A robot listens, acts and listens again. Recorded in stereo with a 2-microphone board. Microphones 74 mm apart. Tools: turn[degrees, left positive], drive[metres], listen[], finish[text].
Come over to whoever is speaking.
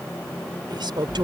Action: turn[-90]
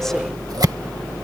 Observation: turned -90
Action: listen[]
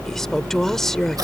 Action: drive[1.0]
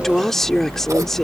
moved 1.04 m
Action: drive[1.0]
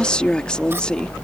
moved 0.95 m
Thought: The woman speaking is now 15° left.
Action: turn[15]
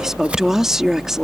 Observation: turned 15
Action: drive[1.0]
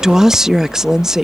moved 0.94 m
Action: drive[1.0]
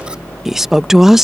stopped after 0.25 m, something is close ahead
Action: finish[I am next to the woman speaking.]